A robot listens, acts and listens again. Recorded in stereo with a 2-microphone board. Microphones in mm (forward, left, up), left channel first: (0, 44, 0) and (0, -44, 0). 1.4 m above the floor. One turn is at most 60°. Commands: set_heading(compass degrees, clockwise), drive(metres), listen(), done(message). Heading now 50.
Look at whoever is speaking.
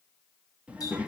set_heading(80)
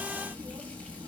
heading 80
set_heading(140)
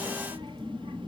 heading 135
set_heading(195)
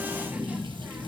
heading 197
set_heading(217)
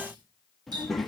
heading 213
done("Facing the child speaking, 1 to 2 m away.")